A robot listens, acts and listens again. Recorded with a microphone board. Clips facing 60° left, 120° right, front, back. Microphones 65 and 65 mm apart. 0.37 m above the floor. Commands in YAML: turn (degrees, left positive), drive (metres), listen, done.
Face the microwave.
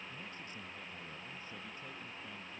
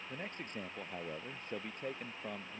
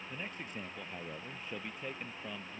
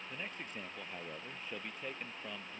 listen: true
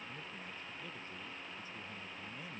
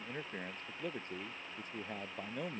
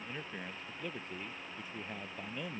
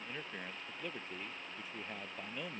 listen: true
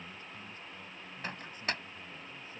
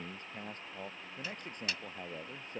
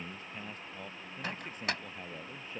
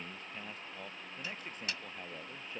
turn: 25
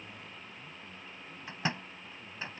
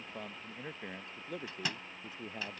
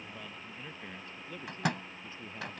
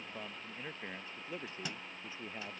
done: "Facing the microwave."